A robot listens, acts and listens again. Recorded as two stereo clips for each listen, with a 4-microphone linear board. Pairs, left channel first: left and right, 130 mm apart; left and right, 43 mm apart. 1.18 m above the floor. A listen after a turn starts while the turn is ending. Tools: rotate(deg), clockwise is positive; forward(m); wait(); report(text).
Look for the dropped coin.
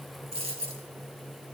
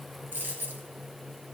rotate(50)
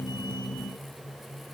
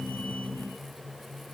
wait()
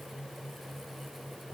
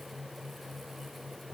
report("I heard a dropped coin, but can't make it out now. It was about straight ahead or 80° right.")